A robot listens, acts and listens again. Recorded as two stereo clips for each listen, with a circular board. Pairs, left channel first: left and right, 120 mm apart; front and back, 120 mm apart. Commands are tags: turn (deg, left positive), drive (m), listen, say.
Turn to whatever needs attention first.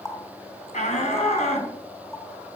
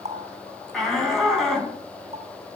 <turn deg="85"/>
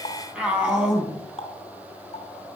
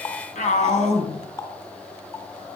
<turn deg="-10"/>
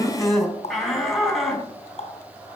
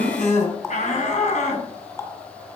<say>Found it: a shout, straight ahead, over 4 m away.</say>